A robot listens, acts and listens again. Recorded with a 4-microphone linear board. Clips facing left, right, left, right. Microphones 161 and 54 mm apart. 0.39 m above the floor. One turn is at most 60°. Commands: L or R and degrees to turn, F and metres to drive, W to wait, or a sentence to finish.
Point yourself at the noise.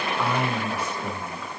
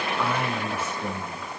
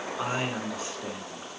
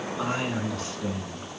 L30
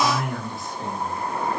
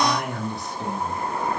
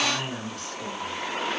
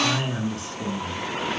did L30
R20
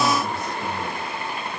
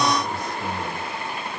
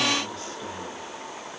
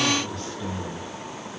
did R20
Found it: a man speaking, straight ahead, over 4 m away.